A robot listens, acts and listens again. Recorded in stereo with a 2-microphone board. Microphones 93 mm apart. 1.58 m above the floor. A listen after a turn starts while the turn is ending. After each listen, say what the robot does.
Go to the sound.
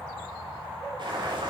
Turn 60° right.
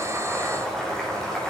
Drive 1.0 m forward.
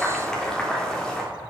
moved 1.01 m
Drive 1.0 m forward.
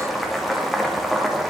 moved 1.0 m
Drive 1.0 m forward.
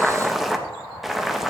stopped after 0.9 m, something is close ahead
I am next to the boiling.